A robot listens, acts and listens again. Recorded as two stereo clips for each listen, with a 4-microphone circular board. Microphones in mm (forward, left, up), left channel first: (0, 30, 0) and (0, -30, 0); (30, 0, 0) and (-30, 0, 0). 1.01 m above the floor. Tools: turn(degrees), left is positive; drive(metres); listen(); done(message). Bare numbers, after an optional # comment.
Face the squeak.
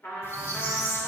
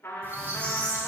# The squeak: 130° left.
turn(130)
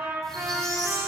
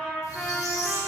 listen()
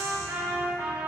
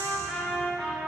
listen()
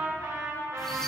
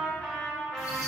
done("Facing where the squeak came from. I can't hear it now.")